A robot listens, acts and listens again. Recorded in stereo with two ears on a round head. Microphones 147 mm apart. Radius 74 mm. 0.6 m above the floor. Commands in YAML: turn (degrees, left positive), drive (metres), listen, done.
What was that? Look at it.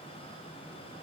listen: true
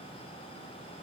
listen: true
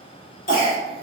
turn: 55
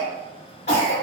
turn: 50
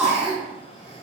done: "Facing the cough."